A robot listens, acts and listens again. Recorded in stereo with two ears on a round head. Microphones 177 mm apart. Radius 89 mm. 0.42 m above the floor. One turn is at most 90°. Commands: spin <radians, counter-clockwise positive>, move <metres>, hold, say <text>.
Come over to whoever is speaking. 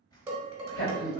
spin 0.96
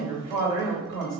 spin 0.44
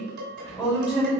spin -0.17
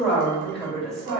move 1.0
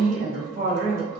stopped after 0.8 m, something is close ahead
say I am next to the woman speaking.